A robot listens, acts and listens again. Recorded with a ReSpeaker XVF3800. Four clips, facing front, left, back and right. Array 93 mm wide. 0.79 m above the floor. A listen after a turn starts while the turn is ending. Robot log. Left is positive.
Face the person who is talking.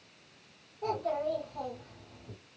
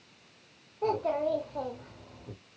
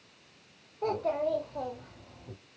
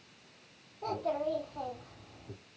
note: The child speaking: 110° left.
cmd yaw +110
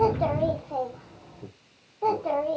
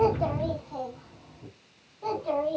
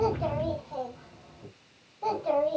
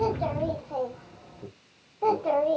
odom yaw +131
note: The child speaking is now 60° right.
cmd yaw -60
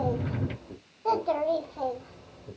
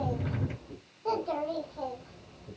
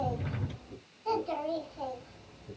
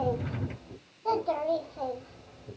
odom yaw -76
end: Facing the child speaking, 1 to 2 m away.